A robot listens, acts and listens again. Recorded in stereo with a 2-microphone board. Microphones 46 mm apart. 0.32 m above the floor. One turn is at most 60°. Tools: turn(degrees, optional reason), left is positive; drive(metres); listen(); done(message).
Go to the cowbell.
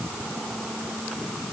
listen()
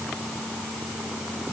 listen()
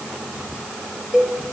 turn(degrees=-30)
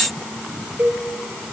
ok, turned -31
turn(degrees=-60, reason="So it is at 140° right.")
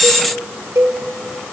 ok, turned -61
turn(degrees=-60, reason="The cowbell is now 80° right.")
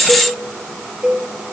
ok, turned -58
turn(degrees=-20, reason="The cowbell is now 20° right.")
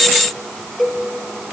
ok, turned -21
drive(metres=1.0)
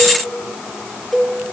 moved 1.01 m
drive(metres=1.0)
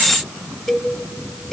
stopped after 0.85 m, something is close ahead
done("I am next to the cowbell.")